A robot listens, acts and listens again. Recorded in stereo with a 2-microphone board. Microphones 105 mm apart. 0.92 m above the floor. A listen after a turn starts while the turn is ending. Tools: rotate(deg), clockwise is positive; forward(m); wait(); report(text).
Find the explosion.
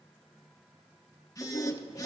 wait()
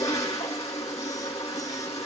wait()
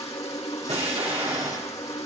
rotate(90)
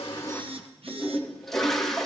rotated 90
report("I heard an explosion from this way, but can't make it out now.")